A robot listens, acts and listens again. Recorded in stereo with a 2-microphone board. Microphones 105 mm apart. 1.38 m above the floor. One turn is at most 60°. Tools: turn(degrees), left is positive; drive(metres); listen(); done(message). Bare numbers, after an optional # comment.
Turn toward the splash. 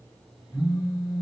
listen()
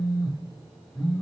listen()
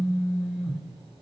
done("I can't make out a splash to turn to.")